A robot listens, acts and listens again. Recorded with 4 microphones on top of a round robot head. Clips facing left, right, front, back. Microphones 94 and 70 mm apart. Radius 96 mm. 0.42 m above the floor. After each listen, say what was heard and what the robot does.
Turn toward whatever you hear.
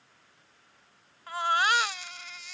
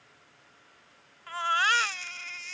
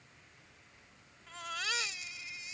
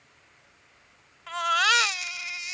The baby crying: 165° left. Turn 165° left.
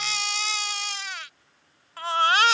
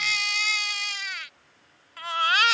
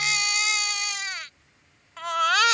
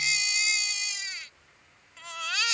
The baby crying is now 30° left. Turn 30° left.
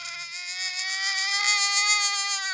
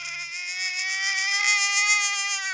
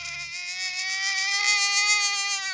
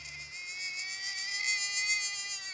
The baby crying is now 10° left. Turn 10° left.
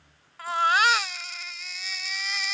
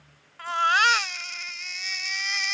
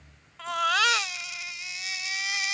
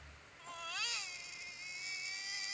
Facing the baby crying.